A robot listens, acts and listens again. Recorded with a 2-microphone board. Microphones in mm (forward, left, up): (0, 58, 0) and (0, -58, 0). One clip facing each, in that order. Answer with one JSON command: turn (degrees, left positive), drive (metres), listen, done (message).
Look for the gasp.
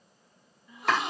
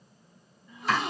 {"turn": 30}
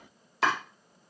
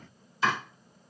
{"listen": true}
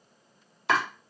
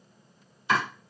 {"done": "I heard a gasp, but can't make it out now. It was about 25° right or 145° left."}